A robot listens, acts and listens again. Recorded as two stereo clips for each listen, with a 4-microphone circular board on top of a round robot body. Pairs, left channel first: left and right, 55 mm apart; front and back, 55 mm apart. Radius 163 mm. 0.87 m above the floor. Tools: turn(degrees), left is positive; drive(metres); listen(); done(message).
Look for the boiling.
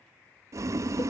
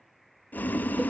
turn(degrees=-60)
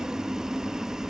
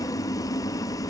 done("Facing the boiling.")